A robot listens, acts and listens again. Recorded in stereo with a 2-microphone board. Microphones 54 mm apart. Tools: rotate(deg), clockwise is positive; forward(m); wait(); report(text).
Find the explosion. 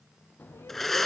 rotate(-35)
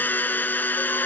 wait()
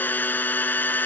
report("I heard an explosion, but can't make it out now. It was about straight ahead or 110° left.")